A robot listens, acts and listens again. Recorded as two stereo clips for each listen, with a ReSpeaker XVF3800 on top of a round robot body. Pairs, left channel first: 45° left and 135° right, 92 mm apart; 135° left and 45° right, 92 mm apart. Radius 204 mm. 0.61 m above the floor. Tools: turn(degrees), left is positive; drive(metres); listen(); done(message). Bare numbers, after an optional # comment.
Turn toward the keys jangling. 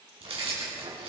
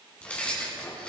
# The keys jangling: 145° right.
turn(-145)
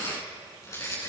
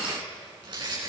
# The keys jangling is now 10° right.
turn(-10)
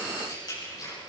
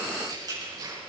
done("Found it: keys jangling, straight ahead.")